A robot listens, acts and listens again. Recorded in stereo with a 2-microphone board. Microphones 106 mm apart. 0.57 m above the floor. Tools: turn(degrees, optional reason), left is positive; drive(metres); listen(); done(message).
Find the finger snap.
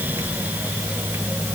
listen()
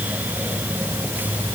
listen()
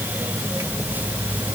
done("I can't make out a finger snap.")